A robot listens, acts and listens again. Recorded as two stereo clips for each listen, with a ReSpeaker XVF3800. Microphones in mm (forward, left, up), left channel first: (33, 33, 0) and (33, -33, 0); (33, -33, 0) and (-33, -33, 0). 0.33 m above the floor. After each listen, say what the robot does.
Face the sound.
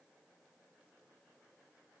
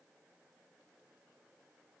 Keep listening.
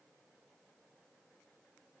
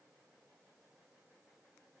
Keep listening.
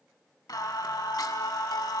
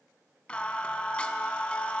Turn 70° left.
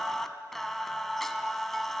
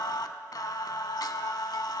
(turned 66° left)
Found it: singing, straight ahead.